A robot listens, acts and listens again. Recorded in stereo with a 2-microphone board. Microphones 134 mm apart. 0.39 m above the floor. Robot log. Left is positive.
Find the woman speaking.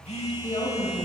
note: The woman speaking: about 50° left or 130° left.
cmd yaw +50
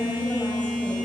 cmd idle
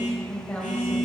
note: So it is at 15° left.
cmd yaw +15
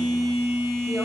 cmd idle
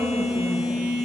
cmd idle
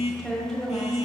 end: Facing the woman speaking, 1 to 2 m away.